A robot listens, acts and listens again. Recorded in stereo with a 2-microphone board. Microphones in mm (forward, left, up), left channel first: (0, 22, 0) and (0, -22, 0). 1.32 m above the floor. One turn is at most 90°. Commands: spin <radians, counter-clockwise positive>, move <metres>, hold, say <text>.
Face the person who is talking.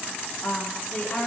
spin 0.70
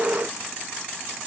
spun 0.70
hold
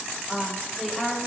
say Facing the woman speaking, 2 to 4 m away.